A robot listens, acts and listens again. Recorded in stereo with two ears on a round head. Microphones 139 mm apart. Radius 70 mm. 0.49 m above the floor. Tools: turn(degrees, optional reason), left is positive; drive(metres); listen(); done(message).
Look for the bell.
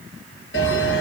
turn(degrees=90)
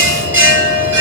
turn(degrees=-15, reason="So it is at 15° right.")
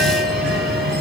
done("Found it: a bell, straight ahead.")